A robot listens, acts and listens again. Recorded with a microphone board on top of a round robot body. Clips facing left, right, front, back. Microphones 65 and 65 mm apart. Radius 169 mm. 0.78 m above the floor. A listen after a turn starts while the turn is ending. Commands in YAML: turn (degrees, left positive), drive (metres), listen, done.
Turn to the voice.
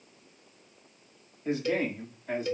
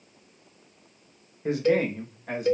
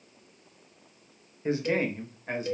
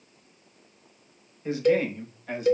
turn: -65
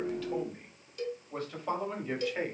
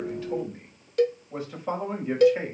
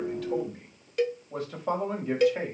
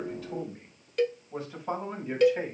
turn: -15
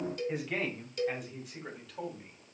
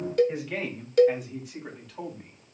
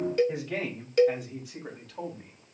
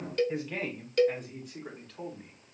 done: "Found it: a man speaking, straight ahead, over 4 m away."